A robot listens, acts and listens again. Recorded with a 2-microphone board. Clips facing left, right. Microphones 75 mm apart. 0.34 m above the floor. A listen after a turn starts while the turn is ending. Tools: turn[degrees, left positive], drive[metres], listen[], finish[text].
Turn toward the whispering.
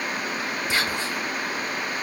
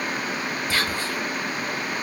Thought: The whispering: about 20° left or 160° left.
Action: turn[20]
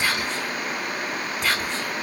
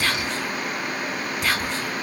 Action: finish[Found it: whispering, straight ahead.]